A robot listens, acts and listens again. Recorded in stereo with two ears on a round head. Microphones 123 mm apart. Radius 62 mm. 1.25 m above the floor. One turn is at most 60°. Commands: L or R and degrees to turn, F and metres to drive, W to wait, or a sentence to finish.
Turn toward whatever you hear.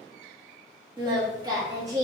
R30
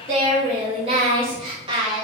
R35
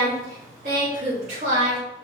R60
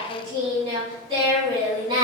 R40
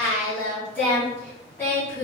L15
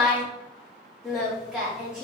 Facing the singing.